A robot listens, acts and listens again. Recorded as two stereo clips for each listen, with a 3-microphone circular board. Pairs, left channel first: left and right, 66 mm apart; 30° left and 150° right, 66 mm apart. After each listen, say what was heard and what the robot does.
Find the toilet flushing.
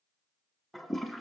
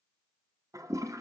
The toilet flushing: straight behind. Turn 180° left.
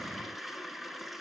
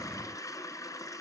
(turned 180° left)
Found it: a toilet flushing, straight ahead, under 1 m away.